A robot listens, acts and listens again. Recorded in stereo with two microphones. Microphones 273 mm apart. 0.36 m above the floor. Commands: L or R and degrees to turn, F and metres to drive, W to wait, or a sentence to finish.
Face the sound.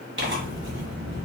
R40
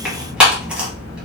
Facing the tearing paper.